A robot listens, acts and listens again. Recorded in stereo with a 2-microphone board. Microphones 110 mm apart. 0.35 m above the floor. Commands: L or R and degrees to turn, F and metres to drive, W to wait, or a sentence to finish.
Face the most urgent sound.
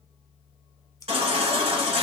R65
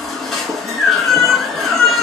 Found it: a baby crying, straight ahead.